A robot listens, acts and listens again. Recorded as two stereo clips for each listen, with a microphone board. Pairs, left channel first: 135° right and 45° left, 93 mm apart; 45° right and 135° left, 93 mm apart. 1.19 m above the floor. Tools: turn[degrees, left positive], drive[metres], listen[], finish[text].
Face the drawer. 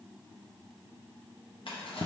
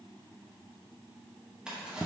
Thought: The drawer: 145° right.
Action: turn[-145]
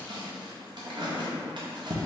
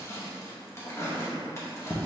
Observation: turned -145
Thought: The drawer is now 15° left.
Action: turn[15]
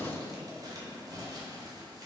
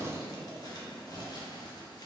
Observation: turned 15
Action: finish[Facing the drawer, under 1 m away.]